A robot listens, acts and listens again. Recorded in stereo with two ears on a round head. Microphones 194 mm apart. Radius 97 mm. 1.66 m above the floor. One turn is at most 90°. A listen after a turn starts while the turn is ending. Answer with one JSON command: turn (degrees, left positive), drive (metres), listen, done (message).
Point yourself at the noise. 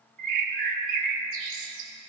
{"turn": -40}
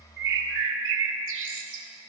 {"turn": -90}
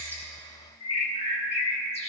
{"turn": 35}
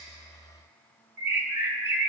{"turn": -10}
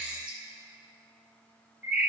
{"done": "Facing the bird, 1 to 2 m away."}